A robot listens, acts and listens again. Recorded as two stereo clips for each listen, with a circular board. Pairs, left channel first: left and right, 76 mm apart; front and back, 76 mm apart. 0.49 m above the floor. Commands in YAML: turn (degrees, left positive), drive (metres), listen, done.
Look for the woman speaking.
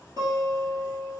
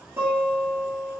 listen: true
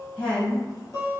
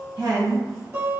turn: 165
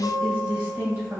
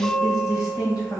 turn: -25
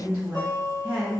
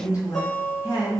turn: -35
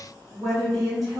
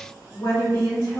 done: "Found it: a woman speaking, straight ahead."